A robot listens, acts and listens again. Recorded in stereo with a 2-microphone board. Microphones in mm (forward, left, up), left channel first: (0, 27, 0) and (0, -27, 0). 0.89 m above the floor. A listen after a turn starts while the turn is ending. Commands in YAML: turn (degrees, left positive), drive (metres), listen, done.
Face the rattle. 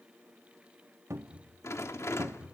turn: 55
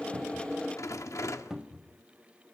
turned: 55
turn: 70
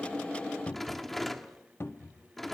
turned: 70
done: "Found it: a rattle, straight ahead, 1 to 2 m away."